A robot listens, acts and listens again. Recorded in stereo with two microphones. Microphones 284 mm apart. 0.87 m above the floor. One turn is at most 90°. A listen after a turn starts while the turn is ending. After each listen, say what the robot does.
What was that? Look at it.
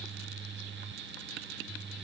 Keep listening.
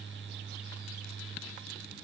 Keep listening.
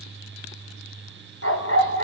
Turn 50° left.
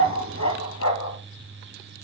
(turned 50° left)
Turn 80° left.
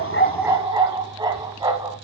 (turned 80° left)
Turn 15° right.
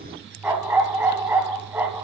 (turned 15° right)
Turn 10° right.
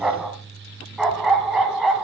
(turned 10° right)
Found it: a dog barking, straight ahead, 2 to 4 m away.